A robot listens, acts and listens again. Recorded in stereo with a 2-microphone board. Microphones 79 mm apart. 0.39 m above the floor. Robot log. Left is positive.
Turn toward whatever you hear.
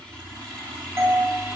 note: The doorbell: about 30° right or 150° right.
cmd yaw -30
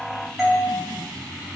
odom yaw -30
end: Found it: a doorbell, straight ahead.